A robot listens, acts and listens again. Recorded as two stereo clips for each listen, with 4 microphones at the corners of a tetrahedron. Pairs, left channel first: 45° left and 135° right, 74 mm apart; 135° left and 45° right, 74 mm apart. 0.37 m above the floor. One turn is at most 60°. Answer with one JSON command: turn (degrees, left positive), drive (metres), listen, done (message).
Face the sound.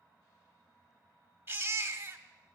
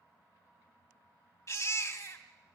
{"turn": 60}
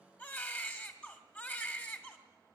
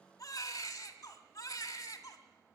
{"turn": 60}
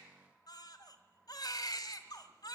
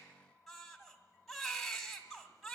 {"turn": 45}
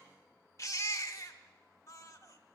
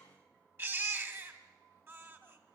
{"done": "Found it: a baby crying, straight ahead, 1 to 2 m away."}